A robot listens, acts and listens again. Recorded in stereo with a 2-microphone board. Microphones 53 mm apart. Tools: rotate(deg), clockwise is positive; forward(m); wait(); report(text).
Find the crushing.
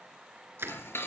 rotate(50)
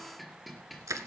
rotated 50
rotate(80)
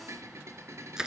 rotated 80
rotate(15)
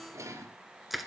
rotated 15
report("Found it: crushing, straight ahead, 1 to 2 m away.")